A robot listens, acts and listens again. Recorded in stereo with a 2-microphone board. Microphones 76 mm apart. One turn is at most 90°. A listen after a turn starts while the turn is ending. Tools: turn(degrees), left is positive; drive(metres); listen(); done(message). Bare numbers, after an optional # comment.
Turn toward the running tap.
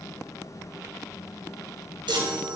listen()
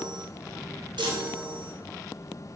listen()
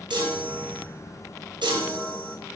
done("I can't make out a running tap, only a chime.")